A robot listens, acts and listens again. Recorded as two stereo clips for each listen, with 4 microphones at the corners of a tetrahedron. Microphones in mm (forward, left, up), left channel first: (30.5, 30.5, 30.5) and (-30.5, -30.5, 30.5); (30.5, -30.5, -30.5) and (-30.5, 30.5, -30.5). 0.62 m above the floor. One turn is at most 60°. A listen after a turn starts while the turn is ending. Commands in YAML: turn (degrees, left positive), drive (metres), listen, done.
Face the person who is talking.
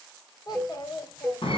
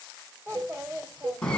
turn: 60
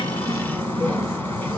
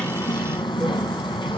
turn: 20
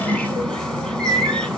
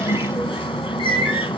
listen: true
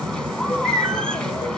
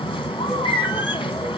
done: "I heard a child speaking from this way, but can't make it out now."